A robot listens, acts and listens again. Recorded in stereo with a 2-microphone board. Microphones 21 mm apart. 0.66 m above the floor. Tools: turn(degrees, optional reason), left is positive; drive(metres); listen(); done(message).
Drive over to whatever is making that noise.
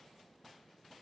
listen()
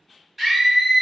turn(degrees=-15, reason="The scream: about 15° right or 165° right.")
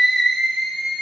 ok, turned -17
drive(metres=1.0)
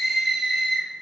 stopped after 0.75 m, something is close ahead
done("Arrived at the scream, straight ahead.")